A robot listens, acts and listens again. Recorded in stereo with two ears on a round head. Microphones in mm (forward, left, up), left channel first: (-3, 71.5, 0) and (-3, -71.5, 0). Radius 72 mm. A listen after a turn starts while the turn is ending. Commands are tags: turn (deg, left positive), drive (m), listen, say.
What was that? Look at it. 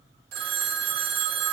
<turn deg="-60"/>
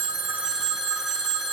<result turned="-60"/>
<say>Found it: a phone ringing, straight ahead.</say>